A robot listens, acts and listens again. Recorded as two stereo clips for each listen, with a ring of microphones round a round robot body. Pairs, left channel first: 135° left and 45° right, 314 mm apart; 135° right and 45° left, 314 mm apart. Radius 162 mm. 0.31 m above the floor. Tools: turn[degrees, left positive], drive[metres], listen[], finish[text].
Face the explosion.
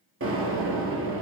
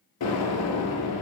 Thought: The explosion: 95° right.
Action: turn[-95]
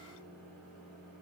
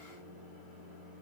Action: finish[I heard an explosion from this way, but can't make it out now.]